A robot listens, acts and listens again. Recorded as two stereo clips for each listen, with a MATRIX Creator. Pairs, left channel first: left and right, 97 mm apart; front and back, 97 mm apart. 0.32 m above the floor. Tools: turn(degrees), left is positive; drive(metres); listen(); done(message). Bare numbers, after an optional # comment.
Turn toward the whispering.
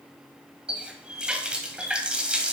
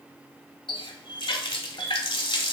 listen()
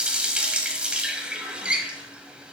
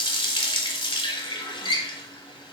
listen()
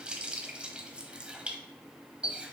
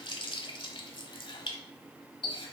done("I can't make out whispering, only a running tap.")